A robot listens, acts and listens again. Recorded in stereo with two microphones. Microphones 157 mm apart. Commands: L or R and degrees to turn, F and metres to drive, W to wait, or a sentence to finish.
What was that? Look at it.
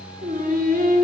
R70
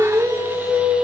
Facing the singing, 1 to 2 m away.